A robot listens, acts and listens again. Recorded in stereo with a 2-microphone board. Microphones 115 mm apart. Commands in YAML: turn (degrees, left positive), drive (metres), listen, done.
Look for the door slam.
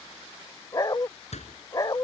turn: 90
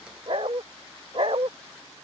done: "Facing where the door slam came from. I can't hear it now."